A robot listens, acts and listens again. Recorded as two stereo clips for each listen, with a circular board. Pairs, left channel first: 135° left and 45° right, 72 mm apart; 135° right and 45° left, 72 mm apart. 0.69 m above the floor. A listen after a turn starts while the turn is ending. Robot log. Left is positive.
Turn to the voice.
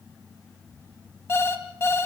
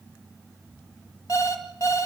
cmd idle
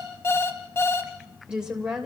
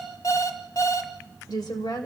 note: The woman speaking: 125° right.
cmd yaw -125
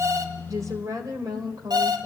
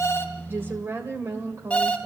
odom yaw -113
note: The woman speaking is now 10° right.
cmd yaw -10
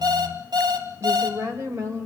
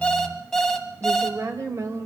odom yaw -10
end: Found it: a woman speaking, straight ahead, 2 to 4 m away.